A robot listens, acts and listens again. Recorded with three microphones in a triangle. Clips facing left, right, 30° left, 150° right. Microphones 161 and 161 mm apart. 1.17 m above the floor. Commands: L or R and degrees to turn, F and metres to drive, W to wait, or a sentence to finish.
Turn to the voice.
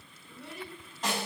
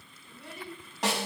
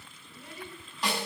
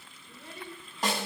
L175
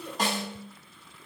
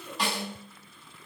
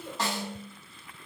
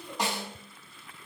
L60
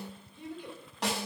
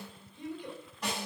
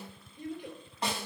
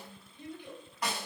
L10
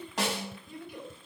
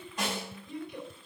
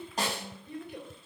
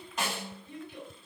Facing the child speaking, 2 to 4 m away.